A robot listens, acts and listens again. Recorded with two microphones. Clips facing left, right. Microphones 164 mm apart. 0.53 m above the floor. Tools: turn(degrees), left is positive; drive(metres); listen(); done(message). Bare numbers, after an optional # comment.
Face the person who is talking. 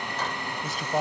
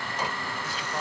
# The man speaking: about 45° left or 135° left.
turn(45)
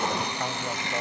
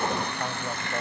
done("Found it: a man speaking, straight ahead.")